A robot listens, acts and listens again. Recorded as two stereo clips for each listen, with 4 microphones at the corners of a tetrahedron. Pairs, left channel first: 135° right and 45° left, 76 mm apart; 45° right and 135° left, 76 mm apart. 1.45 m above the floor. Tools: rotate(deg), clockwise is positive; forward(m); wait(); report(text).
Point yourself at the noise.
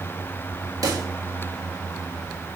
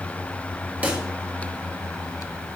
rotate(-70)
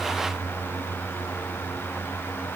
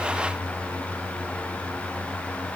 report("Facing where the pop came from. I can't hear it now.")